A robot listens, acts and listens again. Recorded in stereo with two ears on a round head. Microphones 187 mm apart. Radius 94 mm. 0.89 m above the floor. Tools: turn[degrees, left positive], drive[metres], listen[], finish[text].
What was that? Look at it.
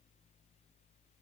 Action: listen[]
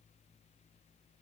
Action: listen[]
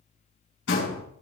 Thought: The door slam: about 60° left or 120° left.
Action: turn[60]
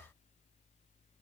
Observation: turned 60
Action: listen[]
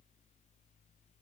Action: finish[I heard a door slam, but can't make it out now. It was about straight ahead or 60° left.]